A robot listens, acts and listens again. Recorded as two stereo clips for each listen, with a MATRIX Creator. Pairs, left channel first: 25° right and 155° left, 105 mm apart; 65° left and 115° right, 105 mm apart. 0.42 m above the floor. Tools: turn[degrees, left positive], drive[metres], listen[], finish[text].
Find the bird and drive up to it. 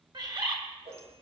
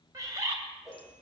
Thought: The bird: 165° right.
Action: turn[-165]
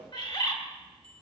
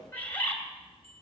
Action: drive[1.0]
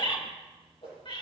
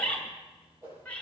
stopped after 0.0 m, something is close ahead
Action: finish[Blocked. The bird is further on, straight ahead.]